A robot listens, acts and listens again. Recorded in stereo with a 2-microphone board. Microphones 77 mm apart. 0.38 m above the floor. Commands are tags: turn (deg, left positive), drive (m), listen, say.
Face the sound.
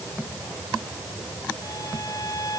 <turn deg="50"/>
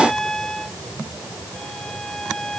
<say>Facing the violin.</say>